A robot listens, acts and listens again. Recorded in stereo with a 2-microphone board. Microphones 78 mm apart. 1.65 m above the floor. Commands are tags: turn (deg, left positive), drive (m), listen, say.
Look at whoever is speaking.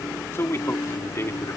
<turn deg="35"/>
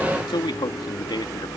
<turn deg="100"/>
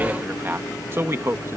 <turn deg="-35"/>
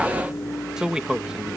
<turn deg="-10"/>
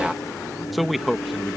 <say>Found it: a man speaking, straight ahead.</say>